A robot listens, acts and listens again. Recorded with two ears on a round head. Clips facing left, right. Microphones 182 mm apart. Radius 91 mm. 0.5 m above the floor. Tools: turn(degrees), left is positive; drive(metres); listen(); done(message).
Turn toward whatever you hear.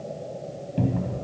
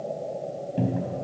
turn(degrees=-30)
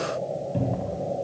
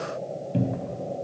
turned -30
turn(degrees=-145)
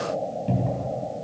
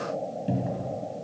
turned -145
turn(degrees=-10)
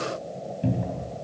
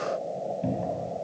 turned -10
done("Facing the cupboard door, 2 to 4 m away.")